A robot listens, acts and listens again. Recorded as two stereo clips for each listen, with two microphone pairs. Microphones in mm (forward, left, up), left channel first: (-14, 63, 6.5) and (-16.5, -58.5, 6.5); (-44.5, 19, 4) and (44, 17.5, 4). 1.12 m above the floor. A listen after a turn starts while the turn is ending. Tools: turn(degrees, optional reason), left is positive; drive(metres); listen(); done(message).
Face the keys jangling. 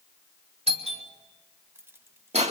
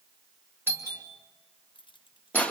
turn(degrees=-160, reason="The keys jangling: 160° right.")
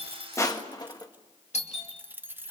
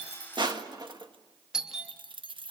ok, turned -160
turn(degrees=-20, reason="The keys jangling is now 20° right.")
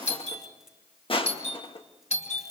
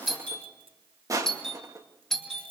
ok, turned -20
listen()
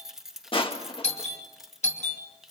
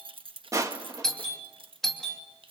done("Found it: keys jangling, straight ahead, under 1 m away.")